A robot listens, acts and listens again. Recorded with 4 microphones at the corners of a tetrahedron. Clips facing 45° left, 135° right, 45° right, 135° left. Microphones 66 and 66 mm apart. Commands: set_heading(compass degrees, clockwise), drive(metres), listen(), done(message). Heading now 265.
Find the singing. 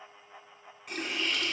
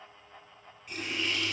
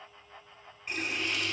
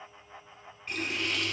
listen()
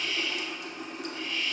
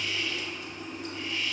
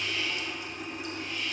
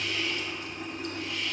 listen()
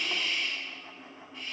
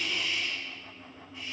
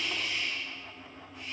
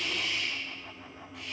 done("I can't make out singing to turn to.")